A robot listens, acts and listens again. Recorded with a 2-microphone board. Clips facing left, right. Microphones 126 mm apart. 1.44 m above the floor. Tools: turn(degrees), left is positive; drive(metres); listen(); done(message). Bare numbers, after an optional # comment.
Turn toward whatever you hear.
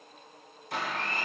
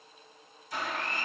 # The blender: about 60° left or 120° left.
turn(60)
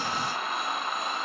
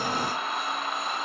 done("Facing the blender, 1 to 2 m away.")